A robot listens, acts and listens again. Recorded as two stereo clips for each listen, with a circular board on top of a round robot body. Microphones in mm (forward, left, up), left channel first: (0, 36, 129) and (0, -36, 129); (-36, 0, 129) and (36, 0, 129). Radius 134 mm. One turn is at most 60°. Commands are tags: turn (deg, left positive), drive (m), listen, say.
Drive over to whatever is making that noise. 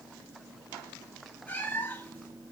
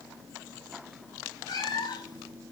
<turn deg="60"/>
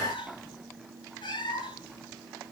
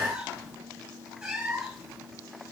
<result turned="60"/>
<turn deg="60"/>
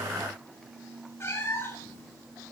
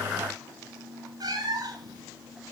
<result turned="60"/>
<turn deg="35"/>
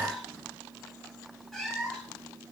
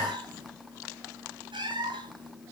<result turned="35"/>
<turn deg="10"/>
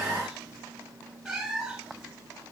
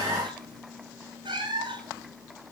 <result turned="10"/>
<drive m="1.0"/>
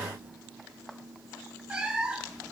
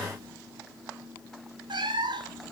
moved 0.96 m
<turn deg="-10"/>
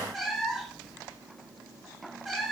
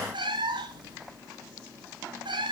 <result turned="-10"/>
<drive m="1.0"/>
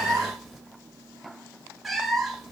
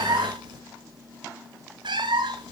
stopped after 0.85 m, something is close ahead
<say>I am next to the cat meowing.</say>